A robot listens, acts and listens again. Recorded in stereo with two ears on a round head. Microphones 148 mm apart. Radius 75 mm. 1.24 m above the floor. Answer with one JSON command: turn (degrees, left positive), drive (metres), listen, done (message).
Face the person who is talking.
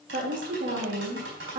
{"turn": -55}
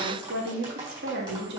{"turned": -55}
{"turn": -70}
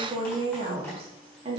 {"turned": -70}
{"turn": -35}
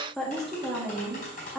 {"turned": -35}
{"done": "Found it: a woman speaking, straight ahead."}